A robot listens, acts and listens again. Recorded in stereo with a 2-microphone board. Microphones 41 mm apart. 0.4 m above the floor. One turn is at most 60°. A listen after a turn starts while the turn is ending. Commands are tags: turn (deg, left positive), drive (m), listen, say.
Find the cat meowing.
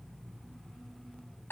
<listen/>
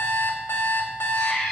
<turn deg="30"/>
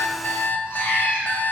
<turn deg="60"/>
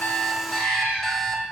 <turn deg="60"/>
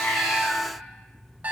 <listen/>
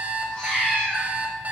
<turn deg="20"/>
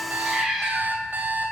<say>Found it: a cat meowing, straight ahead.</say>